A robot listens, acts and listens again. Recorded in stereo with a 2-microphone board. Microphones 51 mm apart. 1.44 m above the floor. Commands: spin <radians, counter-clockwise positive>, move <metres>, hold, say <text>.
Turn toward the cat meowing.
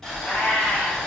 spin 0.79
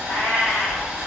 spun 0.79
spin 1.48
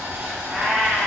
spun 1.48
spin -0.17
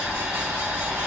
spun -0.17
hold
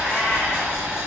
hold
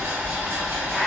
say Facing the cat meowing, 1 to 2 m away.